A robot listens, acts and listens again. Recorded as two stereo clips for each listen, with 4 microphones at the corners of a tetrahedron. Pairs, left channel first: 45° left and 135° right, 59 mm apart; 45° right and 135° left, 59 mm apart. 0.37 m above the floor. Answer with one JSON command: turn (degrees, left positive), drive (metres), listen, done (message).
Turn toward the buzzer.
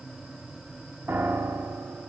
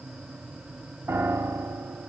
{"listen": true}
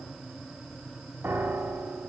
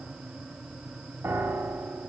{"listen": true}
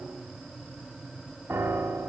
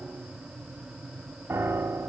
{"done": "I can't make out a buzzer, only a piano."}